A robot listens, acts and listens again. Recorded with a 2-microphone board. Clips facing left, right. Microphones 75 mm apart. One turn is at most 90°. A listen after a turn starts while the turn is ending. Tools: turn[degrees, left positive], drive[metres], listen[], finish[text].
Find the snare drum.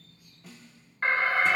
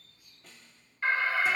Action: turn[30]
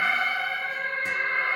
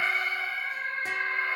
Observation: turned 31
Action: listen[]
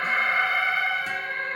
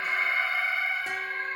Action: listen[]
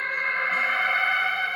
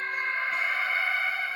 Action: finish[I heard a snare drum, but can't make it out now. It was about 25° right or 145° left.]